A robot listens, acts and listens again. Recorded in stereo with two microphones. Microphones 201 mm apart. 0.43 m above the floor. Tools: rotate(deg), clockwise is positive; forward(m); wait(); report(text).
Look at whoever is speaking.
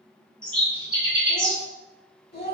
rotate(-55)
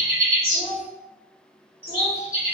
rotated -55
rotate(-60)
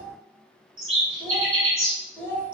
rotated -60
rotate(-10)
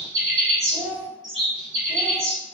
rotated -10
report("Found it: a child speaking, straight ahead.")